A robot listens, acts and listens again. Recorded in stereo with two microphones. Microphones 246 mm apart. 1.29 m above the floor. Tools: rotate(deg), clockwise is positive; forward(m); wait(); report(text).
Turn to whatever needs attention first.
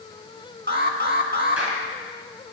rotate(45)
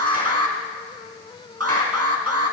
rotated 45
rotate(85)
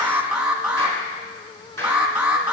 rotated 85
report("Found it: an alarm, straight ahead.")